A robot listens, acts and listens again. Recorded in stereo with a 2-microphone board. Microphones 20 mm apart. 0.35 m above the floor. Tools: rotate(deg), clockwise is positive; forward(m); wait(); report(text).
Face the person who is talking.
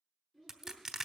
rotate(-25)
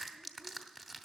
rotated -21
wait()
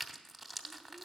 report("Facing the child speaking, 2 to 4 m away.")